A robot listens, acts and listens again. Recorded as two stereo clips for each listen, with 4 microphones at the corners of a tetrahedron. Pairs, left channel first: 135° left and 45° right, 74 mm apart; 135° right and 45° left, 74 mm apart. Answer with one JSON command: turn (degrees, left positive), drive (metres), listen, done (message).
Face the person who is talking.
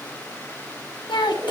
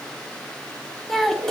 {"turn": 140}
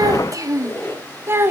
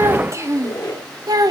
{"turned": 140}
{"turn": 15}
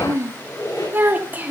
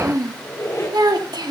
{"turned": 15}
{"turn": 25}
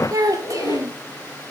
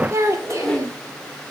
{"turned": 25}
{"done": "Facing the child speaking."}